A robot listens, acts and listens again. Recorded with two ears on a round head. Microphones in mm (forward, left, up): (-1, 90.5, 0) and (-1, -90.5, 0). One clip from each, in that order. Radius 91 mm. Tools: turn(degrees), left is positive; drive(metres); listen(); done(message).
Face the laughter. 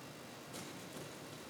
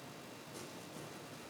listen()
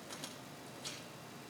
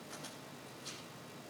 listen()
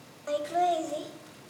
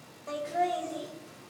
turn(degrees=35)
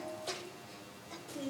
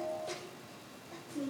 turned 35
turn(degrees=110)
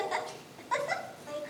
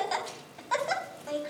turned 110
turn(degrees=-20)
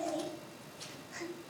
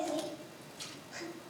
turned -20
done("Facing the laughter, over 4 m away.")